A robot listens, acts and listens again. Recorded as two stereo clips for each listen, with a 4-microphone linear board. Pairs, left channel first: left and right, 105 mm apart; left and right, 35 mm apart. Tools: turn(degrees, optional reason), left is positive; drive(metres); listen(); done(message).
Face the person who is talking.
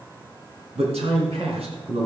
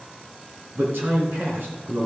turn(degrees=-70, reason="The man speaking: about 70° right or 110° right.")
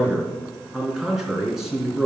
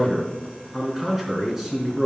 done("Found it: a man speaking, straight ahead, 2 to 4 m away.")